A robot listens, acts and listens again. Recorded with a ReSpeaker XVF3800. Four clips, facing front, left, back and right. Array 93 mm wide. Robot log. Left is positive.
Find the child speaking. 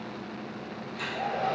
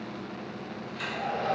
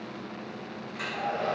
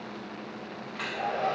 cmd idle
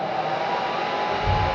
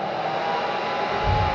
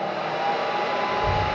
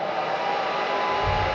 note: The child speaking: 150° right.
cmd yaw -150
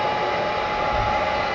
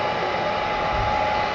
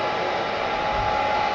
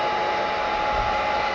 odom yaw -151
note: The child speaking is now 30° left.
cmd yaw +30
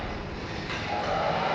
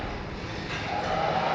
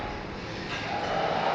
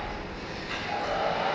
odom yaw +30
note: The child speaking is now 10° left.
cmd yaw +10
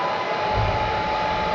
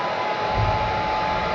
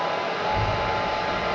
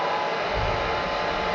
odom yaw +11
end: Facing the child speaking.